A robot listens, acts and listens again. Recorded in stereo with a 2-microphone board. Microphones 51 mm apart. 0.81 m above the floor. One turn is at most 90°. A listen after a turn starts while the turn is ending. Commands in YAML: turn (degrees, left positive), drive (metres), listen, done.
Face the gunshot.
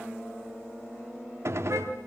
turn: -65
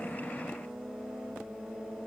listen: true
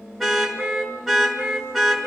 done: "I heard a gunshot, but can't make it out now. It was about straight ahead or 50° right."